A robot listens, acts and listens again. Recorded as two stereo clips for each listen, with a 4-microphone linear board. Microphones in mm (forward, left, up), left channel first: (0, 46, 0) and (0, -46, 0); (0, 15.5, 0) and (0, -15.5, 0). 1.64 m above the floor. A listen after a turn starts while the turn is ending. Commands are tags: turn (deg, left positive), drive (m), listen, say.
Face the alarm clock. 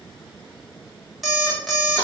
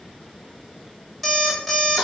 <turn deg="30"/>
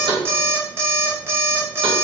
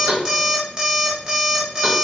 <turn deg="-30"/>
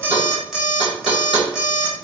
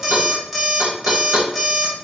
<turn deg="-10"/>
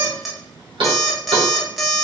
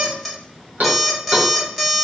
<say>Facing the alarm clock.</say>